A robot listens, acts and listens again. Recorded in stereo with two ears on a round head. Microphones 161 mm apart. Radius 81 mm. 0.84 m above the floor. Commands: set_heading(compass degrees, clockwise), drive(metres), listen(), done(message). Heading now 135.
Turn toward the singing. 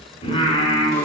set_heading(100)
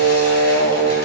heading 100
set_heading(350)
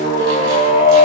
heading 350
set_heading(315)
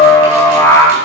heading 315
set_heading(300)
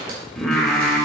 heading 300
done("Found it: singing, straight ahead, 1 to 2 m away.")